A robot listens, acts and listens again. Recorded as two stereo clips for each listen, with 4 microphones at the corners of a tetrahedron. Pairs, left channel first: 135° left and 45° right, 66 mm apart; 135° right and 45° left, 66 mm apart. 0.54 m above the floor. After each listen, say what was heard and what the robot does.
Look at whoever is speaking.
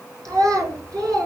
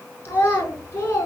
The child speaking: 80° right. Turn 80° right.
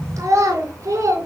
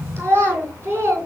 Found it: a child speaking, straight ahead, 2 to 4 m away.